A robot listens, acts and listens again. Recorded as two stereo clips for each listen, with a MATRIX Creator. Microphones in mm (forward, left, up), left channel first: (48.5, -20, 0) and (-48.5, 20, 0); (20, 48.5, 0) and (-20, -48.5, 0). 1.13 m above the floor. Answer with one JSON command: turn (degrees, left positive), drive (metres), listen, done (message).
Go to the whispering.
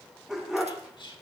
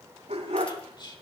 {"turn": 20}
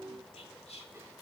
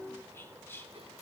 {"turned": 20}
{"drive": 1.0}
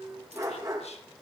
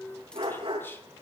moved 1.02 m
{"listen": true}
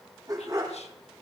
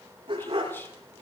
{"listen": true}
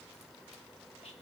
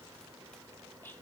{"done": "I heard whispering from this way, but can't make it out now. I did not reach it."}